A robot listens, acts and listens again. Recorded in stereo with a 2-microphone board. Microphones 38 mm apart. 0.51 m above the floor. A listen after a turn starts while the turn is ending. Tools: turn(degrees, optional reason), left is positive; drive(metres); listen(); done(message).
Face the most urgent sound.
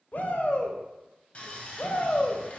turn(degrees=55, reason="The shout: about 55° left or 125° left.")
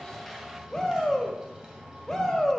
turn(degrees=15, reason="So it is at 15° left.")
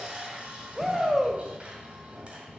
done("Facing the shout, 1 to 2 m away.")